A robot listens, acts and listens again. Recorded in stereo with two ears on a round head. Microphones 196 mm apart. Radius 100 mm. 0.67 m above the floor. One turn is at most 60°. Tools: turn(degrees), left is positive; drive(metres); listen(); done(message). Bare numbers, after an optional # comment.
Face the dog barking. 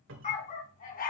# The dog barking: about 40° left or 140° left.
turn(40)
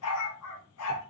# So it is at 95° left.
turn(60)
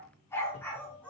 done("Found it: a dog barking, straight ahead.")